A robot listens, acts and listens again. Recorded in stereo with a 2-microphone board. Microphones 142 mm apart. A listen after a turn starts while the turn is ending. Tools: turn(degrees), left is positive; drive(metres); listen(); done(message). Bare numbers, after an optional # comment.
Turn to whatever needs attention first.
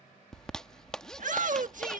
# The shout: about 65° right or 115° right.
turn(-65)
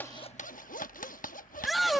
done("Facing the shout.")